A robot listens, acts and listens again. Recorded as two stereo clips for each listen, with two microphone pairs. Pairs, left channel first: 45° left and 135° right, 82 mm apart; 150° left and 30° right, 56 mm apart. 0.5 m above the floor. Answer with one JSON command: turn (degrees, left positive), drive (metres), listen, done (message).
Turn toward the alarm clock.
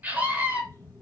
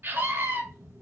{"turn": -15}
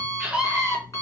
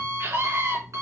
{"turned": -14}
{"done": "Found it: an alarm clock, straight ahead, 2 to 4 m away."}